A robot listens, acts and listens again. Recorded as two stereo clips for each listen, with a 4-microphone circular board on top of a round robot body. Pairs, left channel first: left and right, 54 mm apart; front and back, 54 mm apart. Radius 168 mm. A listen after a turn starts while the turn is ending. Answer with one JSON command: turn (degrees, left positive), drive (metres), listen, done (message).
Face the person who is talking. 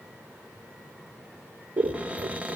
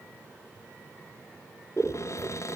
{"listen": true}
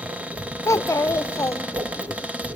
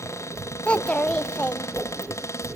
{"turn": 70}
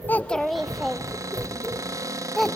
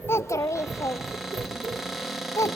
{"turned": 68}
{"done": "Found it: a child speaking, straight ahead, under 1 m away."}